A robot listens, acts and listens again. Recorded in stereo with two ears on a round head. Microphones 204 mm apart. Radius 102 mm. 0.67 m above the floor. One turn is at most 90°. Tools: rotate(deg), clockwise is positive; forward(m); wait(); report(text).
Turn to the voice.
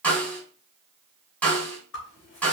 wait()
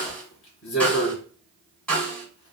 wait()
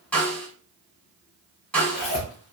report("I can't make out anyone speaking to turn to.")